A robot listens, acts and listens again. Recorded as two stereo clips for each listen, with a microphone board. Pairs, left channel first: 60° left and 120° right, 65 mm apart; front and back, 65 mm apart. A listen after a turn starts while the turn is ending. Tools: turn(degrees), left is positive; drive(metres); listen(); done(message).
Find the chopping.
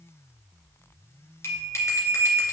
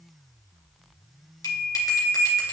listen()
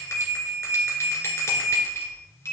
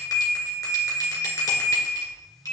listen()
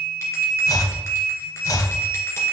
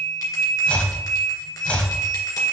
turn(degrees=70)
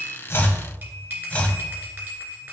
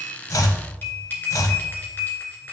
done("Found it: chopping, straight ahead.")